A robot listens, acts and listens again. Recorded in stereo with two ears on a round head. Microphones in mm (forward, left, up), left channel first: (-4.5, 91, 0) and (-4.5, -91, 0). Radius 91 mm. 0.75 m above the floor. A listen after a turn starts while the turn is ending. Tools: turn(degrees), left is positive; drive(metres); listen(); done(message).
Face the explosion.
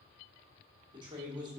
listen()
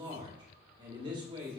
listen()
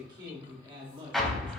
turn(degrees=30)
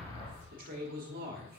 turn(degrees=150)
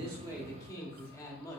done("I heard an explosion from this way, but can't make it out now.")